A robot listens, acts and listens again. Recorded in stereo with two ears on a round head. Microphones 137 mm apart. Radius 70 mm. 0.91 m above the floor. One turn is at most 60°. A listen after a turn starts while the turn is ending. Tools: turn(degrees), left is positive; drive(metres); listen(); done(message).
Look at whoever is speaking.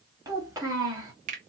turn(degrees=-20)
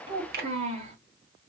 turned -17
turn(degrees=-60)
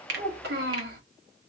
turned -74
turn(degrees=-60)
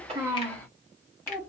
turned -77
turn(degrees=10)
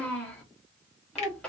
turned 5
done("Facing the child speaking.")